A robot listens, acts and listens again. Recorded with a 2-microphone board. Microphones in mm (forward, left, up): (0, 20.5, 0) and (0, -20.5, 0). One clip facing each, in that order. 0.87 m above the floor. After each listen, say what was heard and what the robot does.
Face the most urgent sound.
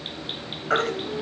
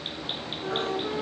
Turn 90° left.
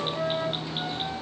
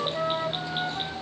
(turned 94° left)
Keep listening.
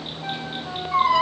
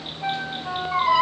The baby crying is now 10° right. Turn 10° right.
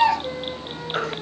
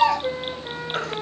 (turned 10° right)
Facing the baby crying, over 4 m away.